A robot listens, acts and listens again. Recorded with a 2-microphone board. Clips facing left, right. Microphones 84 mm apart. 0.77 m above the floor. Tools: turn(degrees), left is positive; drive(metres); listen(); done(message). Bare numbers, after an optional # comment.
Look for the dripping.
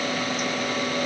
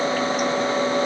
listen()
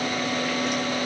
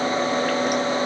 listen()
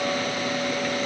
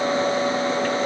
done("I can't make out dripping to turn to.")